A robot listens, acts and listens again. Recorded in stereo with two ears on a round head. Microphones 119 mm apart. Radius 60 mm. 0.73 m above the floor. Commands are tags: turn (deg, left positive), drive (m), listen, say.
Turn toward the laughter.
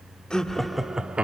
<turn deg="-30"/>
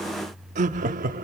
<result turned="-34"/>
<turn deg="-110"/>
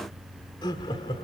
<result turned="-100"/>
<turn deg="40"/>
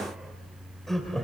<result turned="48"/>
<say>Found it: laughter, straight ahead.</say>